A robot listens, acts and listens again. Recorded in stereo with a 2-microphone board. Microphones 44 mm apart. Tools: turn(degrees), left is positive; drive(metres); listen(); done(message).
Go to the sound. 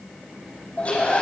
turn(degrees=30)
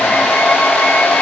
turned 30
turn(degrees=120)
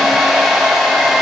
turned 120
drive(metres=1.0)
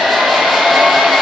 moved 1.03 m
drive(metres=1.0)
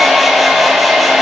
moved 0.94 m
drive(metres=1.0)
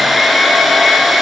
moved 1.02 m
drive(metres=1.0)
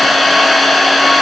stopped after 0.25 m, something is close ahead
done("I am next to the hair dryer.")